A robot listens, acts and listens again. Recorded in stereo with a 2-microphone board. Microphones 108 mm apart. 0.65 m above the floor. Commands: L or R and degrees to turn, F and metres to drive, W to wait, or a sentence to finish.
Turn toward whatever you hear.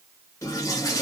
L30
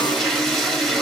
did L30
Facing the toilet flushing.